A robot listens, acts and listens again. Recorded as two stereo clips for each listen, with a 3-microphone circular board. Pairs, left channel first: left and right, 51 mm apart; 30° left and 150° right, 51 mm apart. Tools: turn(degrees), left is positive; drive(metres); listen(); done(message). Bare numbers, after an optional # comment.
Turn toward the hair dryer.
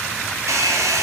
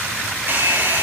# The hair dryer: 100° right.
turn(-100)
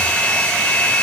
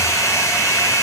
# The hair dryer is now 20° left.
turn(20)
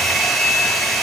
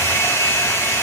done("Found it: a hair dryer, straight ahead, over 4 m away.")